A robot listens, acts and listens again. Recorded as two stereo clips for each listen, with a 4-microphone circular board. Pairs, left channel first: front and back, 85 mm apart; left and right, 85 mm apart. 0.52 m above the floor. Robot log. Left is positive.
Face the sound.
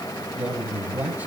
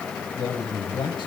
note: The man speaking: 110° left.
cmd yaw +110
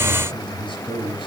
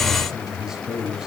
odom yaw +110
note: The man speaking is now 10° right.
cmd yaw -10
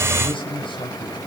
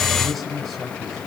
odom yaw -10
end: Found it: a man speaking, straight ahead.